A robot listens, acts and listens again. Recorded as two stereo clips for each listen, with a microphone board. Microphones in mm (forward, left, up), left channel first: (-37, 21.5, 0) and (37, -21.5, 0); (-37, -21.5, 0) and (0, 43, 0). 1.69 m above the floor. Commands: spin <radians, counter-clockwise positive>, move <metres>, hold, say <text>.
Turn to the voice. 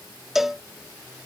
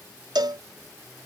hold
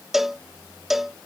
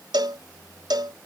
hold
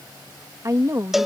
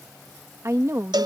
spin 0.26
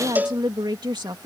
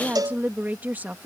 say Facing the woman speaking.